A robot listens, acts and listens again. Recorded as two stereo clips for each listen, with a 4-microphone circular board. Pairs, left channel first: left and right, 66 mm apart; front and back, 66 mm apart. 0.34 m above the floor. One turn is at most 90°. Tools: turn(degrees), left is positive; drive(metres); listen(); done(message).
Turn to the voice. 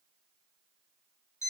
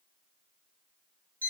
listen()
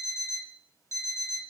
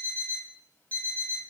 listen()
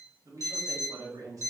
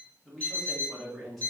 turn(degrees=-90)
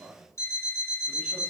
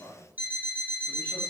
turn(degrees=-30)
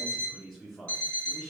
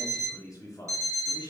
turn(degrees=10)
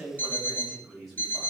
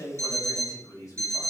done("Found it: a man speaking, straight ahead, 1 to 2 m away.")